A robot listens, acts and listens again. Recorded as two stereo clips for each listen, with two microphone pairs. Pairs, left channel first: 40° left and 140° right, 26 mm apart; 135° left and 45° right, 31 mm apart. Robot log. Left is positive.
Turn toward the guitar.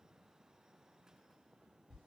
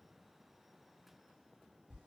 cmd idle
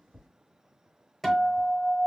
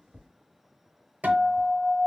note: The guitar: 40° right.
cmd yaw -40
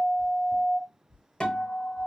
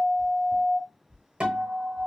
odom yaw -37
end: Found it: a guitar, straight ahead, under 1 m away.